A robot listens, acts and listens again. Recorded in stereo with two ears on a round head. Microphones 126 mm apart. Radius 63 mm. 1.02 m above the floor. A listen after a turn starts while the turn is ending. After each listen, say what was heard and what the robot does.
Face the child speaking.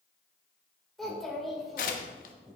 Turn 30° left.
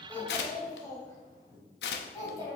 So it is at 155° left. Turn 155° left.
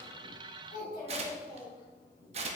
The child speaking is now 30° left. Turn 30° left.
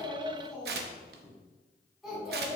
Facing the child speaking, over 4 m away.